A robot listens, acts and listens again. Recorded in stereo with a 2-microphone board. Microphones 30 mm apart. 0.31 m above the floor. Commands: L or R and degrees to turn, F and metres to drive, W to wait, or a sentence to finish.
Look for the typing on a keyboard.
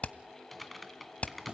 L30
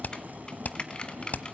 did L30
L150
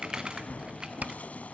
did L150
R25
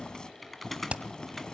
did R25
Facing the typing on a keyboard, 1 to 2 m away.